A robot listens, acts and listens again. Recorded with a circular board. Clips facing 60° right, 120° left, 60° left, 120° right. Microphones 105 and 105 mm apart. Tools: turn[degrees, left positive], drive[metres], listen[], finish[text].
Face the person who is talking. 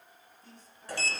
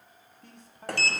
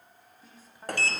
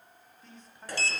Thought: The man speaking: 140° left.
Action: turn[140]
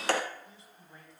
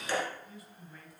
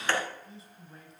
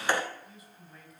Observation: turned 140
Action: finish[Found it: a man speaking, straight ahead, 2 to 4 m away.]